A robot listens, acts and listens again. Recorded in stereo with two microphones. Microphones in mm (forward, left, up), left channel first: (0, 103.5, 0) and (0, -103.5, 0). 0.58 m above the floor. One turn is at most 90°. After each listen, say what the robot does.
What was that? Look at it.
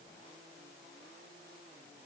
Keep listening.
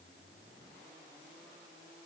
Keep listening.
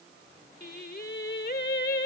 Turn 50° left.
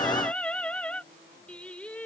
Facing the singing.